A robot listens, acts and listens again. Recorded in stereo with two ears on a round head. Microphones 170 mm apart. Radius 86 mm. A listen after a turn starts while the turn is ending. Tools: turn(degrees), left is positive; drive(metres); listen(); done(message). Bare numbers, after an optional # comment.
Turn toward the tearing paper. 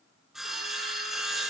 listen()
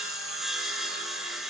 listen()
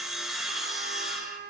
done("I can't make out tearing paper, only sawing and a trumpet.")